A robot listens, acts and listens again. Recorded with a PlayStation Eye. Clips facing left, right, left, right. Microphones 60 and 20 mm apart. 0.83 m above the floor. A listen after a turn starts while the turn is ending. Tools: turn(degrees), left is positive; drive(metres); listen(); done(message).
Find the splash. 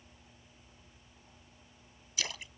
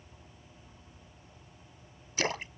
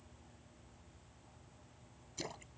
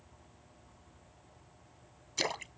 turn(degrees=-45)
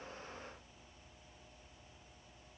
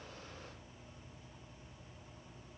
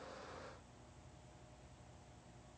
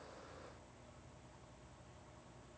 listen()
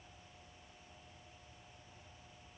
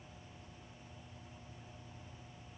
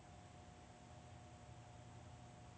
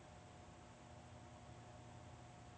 done("I heard a splash, but can't make it out now. It was about straight ahead or 90° right.")